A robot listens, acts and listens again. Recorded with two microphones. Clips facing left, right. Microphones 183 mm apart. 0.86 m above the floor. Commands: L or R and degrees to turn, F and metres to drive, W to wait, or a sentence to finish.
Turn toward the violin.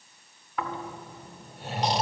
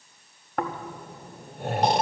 W
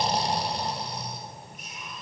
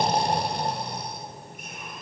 W
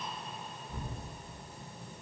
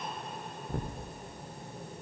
I can't make out a violin to turn to.